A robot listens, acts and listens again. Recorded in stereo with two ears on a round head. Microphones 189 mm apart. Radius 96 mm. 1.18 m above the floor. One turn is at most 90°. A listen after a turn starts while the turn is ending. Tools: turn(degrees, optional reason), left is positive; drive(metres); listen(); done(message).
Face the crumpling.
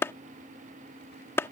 listen()
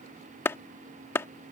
listen()
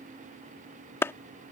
done("I can't make out crumpling, only a clap.")